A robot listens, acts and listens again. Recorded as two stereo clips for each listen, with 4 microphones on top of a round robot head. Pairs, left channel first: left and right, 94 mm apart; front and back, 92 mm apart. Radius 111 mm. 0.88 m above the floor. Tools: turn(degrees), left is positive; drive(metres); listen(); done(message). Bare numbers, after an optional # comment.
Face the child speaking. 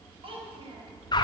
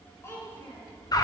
# The child speaking: 65° right.
turn(-65)
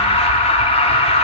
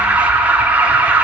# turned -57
# Nothing new. It was at 10° right.
turn(-10)
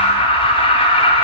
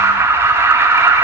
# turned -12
listen()
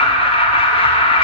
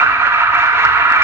done("Facing where the child speaking came from. I can't hear it now.")